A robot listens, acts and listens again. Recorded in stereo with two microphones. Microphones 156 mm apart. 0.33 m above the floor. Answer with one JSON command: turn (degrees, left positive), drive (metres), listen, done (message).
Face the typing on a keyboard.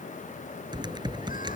{"turn": -30}
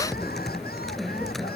{"done": "Facing the typing on a keyboard."}